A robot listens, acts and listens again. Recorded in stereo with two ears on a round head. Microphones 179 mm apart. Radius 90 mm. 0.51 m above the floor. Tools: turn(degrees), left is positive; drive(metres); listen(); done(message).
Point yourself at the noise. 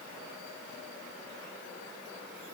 listen()
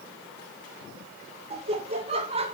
turn(degrees=-30)
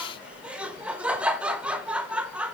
done("Facing the laughter, 1 to 2 m away.")